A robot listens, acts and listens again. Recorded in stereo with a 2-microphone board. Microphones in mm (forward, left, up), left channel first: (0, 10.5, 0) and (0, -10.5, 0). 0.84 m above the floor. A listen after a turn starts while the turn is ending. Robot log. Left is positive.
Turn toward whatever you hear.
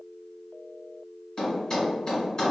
note: The thud: about 40° left or 140° left.
cmd yaw +40
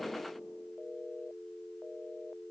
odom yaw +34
cmd idle
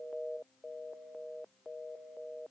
end: I heard a thud, but can't make it out now. It was about 5° left or 110° left.